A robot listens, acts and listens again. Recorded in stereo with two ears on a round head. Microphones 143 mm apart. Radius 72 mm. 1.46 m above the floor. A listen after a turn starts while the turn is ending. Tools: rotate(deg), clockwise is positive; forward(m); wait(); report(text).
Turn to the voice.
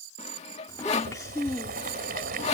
rotate(-20)
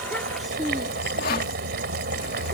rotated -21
report("Facing the child speaking.")